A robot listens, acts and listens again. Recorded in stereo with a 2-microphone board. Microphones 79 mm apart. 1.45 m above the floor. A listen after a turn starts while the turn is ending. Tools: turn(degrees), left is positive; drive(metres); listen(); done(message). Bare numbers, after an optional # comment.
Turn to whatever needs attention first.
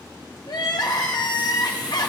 # The crying: about 60° left or 120° left.
turn(60)
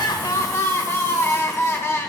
# So it is at 40° left.
turn(40)
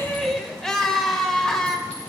# The crying is now 10° left.
turn(10)
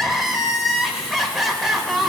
done("Found it: crying, straight ahead, 1 to 2 m away.")